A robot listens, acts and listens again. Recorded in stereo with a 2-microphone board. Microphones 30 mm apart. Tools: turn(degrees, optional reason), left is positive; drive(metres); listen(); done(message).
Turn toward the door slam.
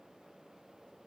listen()
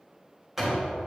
turn(degrees=-30)
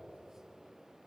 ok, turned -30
listen()
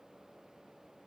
done("I heard a door slam, but can't make it out now. It was about 20° left or 140° right.")